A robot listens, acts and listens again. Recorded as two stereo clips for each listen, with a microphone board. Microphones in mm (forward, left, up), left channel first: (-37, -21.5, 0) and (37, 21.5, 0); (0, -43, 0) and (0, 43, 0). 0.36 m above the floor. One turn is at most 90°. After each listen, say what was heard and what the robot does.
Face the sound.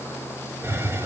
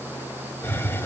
The hiss: 30° right. Turn 30° right.
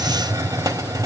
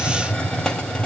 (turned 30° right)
The hiss is now 10° right. Turn 10° right.
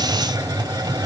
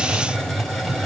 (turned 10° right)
Found it: a hiss, straight ahead.